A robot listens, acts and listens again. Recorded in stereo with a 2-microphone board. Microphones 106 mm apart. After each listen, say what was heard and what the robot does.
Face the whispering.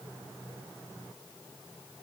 Keep listening.
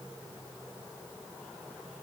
Keep listening.
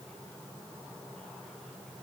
I can't make out whispering.